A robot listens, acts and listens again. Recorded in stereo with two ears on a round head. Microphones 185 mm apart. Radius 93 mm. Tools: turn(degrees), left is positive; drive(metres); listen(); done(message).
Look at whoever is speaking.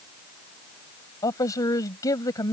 turn(degrees=15)
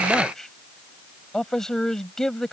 done("Found it: a man speaking, straight ahead.")